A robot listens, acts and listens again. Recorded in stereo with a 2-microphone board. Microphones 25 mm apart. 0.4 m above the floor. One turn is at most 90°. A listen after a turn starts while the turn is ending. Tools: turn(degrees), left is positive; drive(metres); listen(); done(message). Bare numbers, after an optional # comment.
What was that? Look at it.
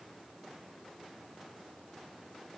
listen()
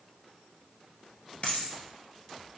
# The dropped coin: about 55° left or 125° left.
turn(55)
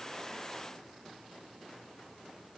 listen()
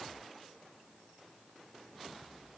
done("I heard a dropped coin, but can't make it out now. It was about straight ahead or 70° left.")